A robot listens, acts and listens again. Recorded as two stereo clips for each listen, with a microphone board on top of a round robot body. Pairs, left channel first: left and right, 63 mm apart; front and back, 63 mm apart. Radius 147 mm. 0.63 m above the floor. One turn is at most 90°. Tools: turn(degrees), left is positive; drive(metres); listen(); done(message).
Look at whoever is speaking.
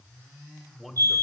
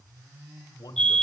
done("Facing the man speaking.")